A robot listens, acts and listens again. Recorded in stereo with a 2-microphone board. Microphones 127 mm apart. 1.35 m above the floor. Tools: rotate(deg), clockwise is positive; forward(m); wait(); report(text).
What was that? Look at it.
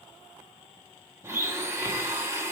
rotate(20)
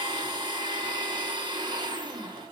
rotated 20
rotate(145)
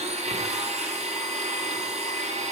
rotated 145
rotate(60)
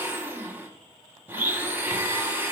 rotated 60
rotate(15)
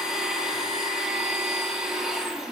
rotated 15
report("Found it: a blender, straight ahead.")